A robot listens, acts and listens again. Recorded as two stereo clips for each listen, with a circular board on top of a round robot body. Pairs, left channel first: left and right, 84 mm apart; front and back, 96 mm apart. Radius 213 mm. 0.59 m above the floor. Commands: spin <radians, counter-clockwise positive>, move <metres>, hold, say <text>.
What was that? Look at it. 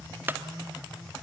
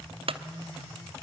spin -2.71
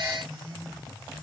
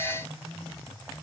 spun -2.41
spin -0.35
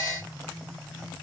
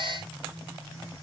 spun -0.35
say I heard a clunk from this way, but can't make it out now.